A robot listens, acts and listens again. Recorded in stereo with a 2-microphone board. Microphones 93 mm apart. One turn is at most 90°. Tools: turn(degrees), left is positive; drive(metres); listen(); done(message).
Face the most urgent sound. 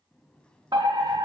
turn(degrees=-50)
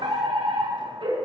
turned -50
turn(degrees=-75)
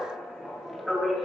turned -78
done("Found it: a fire alarm, straight ahead.")